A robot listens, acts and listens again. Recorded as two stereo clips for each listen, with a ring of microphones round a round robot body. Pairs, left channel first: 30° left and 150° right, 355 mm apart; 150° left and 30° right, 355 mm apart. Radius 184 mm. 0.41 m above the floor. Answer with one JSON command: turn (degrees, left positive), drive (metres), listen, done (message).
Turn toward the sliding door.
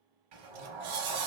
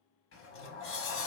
{"turn": -150}
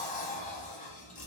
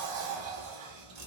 {"turn": -40}
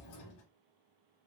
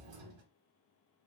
{"turn": -15}
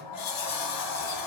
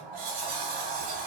{"done": "Facing the sliding door."}